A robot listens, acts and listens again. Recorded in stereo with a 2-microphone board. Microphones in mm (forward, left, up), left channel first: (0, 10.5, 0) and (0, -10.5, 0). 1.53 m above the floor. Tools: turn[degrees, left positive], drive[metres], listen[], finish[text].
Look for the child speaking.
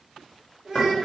Action: turn[-30]
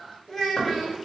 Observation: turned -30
Thought: So it is at 15° left.
Action: turn[15]
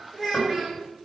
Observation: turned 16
Action: finish[Found it: a child speaking, straight ahead.]